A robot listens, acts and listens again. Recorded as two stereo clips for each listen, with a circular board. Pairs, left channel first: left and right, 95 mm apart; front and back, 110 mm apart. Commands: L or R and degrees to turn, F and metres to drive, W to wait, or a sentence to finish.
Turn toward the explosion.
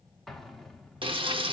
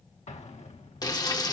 Found it: an explosion, straight ahead, 1 to 2 m away.